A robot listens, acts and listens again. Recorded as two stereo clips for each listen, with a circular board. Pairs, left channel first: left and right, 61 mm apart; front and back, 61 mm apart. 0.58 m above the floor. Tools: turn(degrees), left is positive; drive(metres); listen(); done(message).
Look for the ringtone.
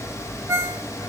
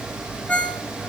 turn(degrees=-70)
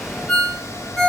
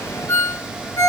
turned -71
done("Found it: a ringtone, straight ahead, under 1 m away.")